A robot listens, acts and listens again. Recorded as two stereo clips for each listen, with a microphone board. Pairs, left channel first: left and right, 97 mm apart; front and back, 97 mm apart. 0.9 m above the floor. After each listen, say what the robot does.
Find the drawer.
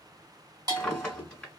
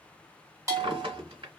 Turn 170° left.
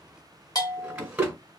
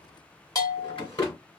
Turn 15° right.
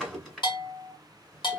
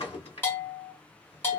Facing the drawer.